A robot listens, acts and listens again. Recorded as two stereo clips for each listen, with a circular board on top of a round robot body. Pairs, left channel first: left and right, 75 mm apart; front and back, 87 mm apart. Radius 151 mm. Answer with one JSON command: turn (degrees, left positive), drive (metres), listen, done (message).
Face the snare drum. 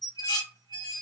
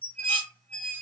{"listen": true}
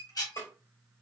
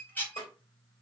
{"turn": 30}
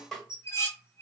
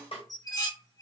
{"done": "Facing the snare drum."}